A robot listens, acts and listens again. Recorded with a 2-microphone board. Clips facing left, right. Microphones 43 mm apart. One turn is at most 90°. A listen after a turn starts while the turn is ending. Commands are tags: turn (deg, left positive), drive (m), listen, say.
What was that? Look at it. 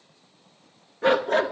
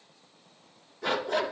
<turn deg="30"/>
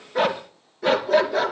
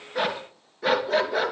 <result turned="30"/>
<turn deg="-10"/>
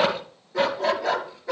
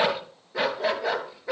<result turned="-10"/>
<turn deg="-10"/>
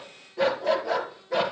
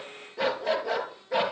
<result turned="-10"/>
<say>Facing the dog barking, 2 to 4 m away.</say>